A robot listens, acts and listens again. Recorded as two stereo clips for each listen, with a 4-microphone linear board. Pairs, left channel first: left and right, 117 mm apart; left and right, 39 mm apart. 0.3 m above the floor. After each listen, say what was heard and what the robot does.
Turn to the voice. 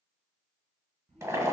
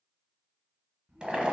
The child speaking: about 65° right or 115° right. Turn 65° right.
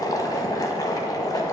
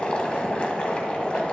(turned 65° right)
Keep listening.
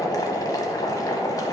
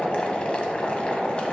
Keep listening.
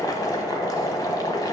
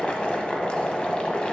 I heard a child speaking, but can't make it out now. It was about straight ahead or 50° right.